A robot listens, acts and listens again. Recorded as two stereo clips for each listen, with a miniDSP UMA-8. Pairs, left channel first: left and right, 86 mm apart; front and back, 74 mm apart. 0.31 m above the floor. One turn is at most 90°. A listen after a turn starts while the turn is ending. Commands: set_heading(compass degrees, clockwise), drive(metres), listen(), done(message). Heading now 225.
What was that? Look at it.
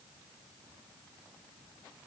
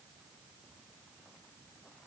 listen()
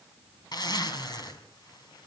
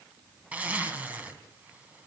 set_heading(135)
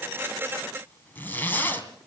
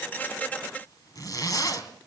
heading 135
set_heading(110)
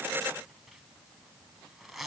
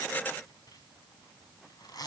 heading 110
done("Found it: a zipper, straight ahead, 2 to 4 m away.")